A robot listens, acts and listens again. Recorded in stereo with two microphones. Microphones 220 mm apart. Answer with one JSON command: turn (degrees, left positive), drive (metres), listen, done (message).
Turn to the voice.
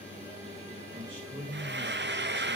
{"turn": -55}
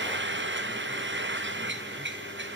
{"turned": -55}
{"listen": true}
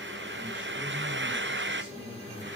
{"listen": true}
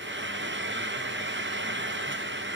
{"done": "I heard a man speaking, but can't make it out now. It was about straight ahead or 70° right."}